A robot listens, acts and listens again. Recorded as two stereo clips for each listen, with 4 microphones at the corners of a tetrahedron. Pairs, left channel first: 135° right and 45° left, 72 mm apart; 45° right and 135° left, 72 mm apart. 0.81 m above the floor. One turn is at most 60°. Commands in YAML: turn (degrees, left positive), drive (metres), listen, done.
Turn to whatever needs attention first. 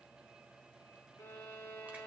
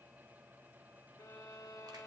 listen: true
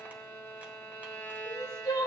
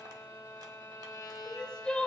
turn: -60
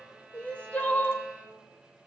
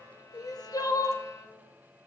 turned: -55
turn: -60
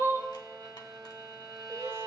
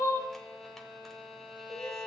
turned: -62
done: "Found it: crying, straight ahead, 1 to 2 m away."